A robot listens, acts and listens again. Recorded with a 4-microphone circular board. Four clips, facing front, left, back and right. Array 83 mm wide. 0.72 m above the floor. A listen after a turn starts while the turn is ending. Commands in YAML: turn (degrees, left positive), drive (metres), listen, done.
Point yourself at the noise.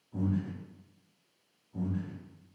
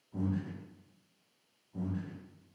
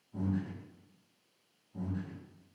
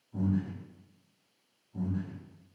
turn: 20
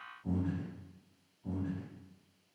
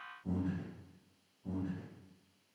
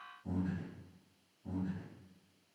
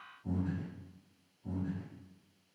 turn: 10
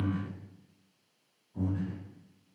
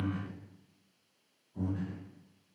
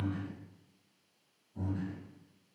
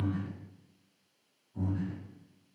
done: "Facing the breathing."